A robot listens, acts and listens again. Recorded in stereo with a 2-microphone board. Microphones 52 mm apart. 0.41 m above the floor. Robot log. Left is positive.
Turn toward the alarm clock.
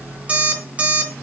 note: The alarm clock: about 25° right or 155° right.
cmd yaw -25
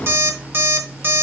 note: So it is at 130° right.
cmd yaw -130
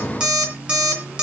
note: The alarm clock is now 15° right.
cmd yaw -15
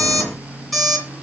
end: Found it: an alarm clock, straight ahead.